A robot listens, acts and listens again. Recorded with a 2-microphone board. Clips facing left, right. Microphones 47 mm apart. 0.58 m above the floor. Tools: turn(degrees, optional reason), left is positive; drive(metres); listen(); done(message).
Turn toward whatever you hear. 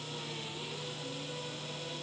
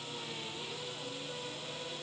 listen()
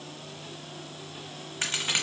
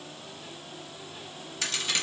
turn(degrees=35, reason="The crack: about 35° left or 145° left.")
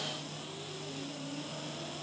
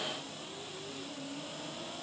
listen()
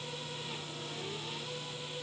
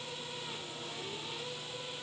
done("I heard a crack, but can't make it out now. It was about straight ahead or 110° left.")